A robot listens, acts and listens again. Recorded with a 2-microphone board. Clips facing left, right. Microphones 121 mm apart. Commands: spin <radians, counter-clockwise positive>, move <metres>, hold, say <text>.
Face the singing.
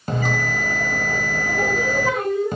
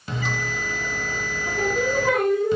spin -1.13
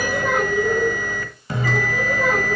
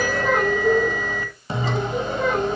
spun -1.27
say Found it: singing, straight ahead, over 4 m away.